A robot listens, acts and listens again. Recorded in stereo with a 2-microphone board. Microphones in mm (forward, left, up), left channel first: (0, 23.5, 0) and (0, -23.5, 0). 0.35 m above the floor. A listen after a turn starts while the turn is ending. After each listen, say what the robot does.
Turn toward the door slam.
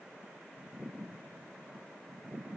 Keep listening.
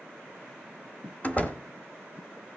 Turn 30° left.
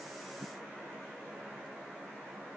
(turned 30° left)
Keep listening.
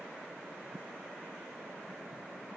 I heard a door slam, but can't make it out now. It was about straight ahead or 120° left.